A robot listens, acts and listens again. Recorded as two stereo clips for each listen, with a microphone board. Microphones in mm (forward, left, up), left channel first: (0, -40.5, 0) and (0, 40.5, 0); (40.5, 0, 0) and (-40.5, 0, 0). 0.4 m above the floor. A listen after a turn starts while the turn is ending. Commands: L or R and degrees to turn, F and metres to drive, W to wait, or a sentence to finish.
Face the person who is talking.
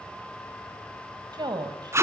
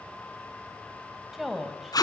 L90
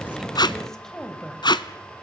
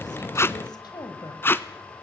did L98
Found it: a woman speaking, straight ahead, 2 to 4 m away.